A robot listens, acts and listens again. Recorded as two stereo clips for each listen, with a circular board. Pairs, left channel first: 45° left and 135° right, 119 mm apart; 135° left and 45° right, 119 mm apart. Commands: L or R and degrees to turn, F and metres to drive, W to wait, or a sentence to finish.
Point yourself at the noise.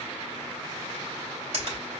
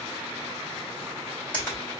R150
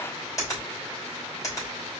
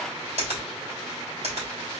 R20
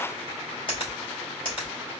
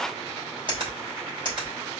Facing the finger snap, 2 to 4 m away.